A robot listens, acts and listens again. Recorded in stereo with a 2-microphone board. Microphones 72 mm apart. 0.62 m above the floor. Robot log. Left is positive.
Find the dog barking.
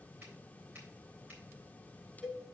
cmd idle
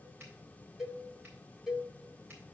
cmd idle
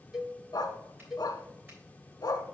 note: The dog barking: about 70° left or 110° left.
cmd yaw +70
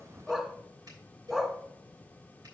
end: Facing the dog barking, 1 to 2 m away.